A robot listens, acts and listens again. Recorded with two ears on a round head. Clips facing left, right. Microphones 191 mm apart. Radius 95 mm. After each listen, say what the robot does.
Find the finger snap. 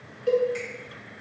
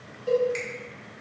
Turn 25° right.
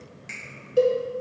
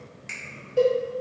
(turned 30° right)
Found it: a finger snap, straight ahead, 1 to 2 m away.